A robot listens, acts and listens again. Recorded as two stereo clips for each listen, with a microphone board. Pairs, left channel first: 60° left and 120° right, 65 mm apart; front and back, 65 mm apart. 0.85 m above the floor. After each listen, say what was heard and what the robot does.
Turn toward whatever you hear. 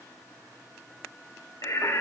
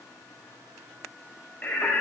The singing: 65° left. Turn 65° left.
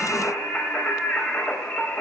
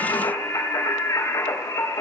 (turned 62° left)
Facing the singing.